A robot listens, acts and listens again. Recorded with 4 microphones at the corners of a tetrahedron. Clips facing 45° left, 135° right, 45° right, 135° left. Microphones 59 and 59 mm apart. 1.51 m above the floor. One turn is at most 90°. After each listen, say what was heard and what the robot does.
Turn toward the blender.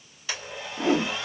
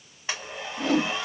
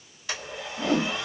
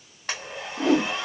The blender: 165° left. Turn 90° left.
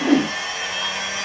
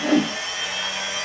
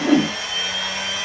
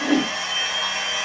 The blender is now 75° left. Turn 75° left.
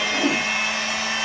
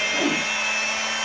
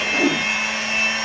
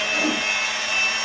The blender is now 10° left. Turn 10° left.
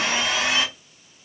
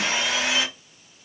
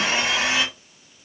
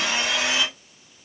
Found it: a blender, straight ahead, 1 to 2 m away.